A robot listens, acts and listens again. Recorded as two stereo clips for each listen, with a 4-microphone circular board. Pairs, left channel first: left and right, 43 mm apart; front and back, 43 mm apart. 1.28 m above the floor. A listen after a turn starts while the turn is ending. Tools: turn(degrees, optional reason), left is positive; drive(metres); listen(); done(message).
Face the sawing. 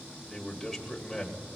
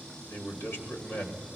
listen()
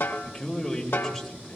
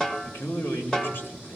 listen()
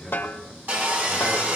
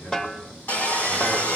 turn(degrees=-50, reason="The sawing: 50° right.")
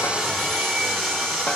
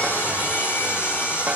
done("Facing the sawing, over 4 m away.")